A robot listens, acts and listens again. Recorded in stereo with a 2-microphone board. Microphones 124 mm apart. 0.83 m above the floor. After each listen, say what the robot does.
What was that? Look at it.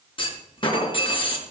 Turn 45° left.
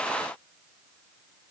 Keep listening.
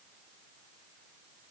I heard a clunk, but can't make it out now. It was about straight ahead or 90° left.